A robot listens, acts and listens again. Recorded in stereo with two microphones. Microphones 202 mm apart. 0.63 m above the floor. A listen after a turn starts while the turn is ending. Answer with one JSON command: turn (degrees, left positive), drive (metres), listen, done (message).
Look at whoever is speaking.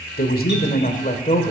{"turn": 35}
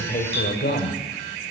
{"turn": 125}
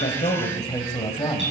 {"turn": 25}
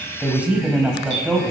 {"done": "Found it: a man speaking, straight ahead, 2 to 4 m away."}